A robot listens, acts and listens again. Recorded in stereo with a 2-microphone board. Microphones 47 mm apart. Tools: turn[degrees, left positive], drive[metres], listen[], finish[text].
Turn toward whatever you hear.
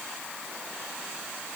Action: listen[]
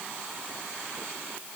Action: listen[]
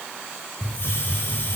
Thought: The hiss: about 60° left or 120° left.
Action: turn[60]
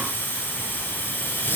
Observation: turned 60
Thought: So it is at 55° left.
Action: turn[55]
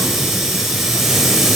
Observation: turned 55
Thought: The hiss is now 10° right.
Action: turn[-10]
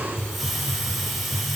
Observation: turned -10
Action: finish[Found it: a hiss, straight ahead.]